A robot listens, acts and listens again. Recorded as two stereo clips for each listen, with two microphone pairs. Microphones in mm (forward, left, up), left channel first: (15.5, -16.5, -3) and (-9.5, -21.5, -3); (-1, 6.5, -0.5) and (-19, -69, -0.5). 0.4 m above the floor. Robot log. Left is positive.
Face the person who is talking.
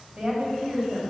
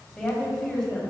note: The woman speaking: 160° left.
cmd yaw +160
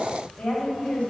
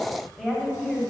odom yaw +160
note: The woman speaking is now 10° right.
cmd yaw -10
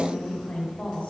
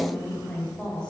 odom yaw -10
end: Found it: a woman speaking, straight ahead.